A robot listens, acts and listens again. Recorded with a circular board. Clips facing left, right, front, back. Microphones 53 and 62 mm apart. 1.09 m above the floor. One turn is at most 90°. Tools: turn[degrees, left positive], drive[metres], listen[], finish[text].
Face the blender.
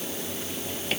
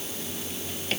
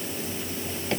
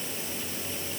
Action: listen[]
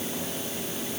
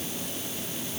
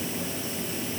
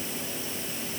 Action: listen[]
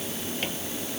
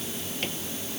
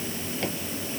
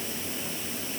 Action: finish[I can't make out a blender to turn to.]